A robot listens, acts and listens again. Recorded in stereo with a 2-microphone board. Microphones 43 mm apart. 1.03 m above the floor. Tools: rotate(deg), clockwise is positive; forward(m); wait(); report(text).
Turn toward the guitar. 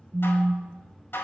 wait()
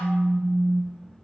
wait()
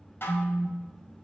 report("I can't make out a guitar, only dishes clattering and a phone buzzing.")